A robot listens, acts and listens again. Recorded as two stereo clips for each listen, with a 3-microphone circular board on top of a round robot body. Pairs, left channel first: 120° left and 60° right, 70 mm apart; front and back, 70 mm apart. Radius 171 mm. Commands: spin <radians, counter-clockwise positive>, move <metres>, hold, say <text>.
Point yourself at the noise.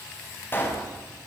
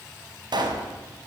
spin 3.14
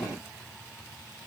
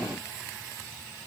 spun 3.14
say I heard a pop from this way, but can't make it out now.